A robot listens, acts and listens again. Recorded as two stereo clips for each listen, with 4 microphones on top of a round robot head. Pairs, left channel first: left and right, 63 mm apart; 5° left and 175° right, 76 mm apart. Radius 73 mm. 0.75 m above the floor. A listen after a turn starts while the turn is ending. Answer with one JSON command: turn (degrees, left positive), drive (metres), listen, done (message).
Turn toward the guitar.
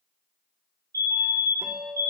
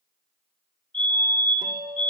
{"turn": -150}
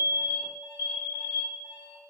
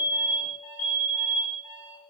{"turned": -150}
{"listen": true}
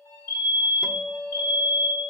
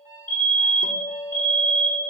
{"turn": -15}
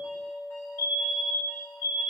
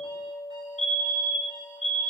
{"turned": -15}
{"done": "Facing the guitar, under 1 m away."}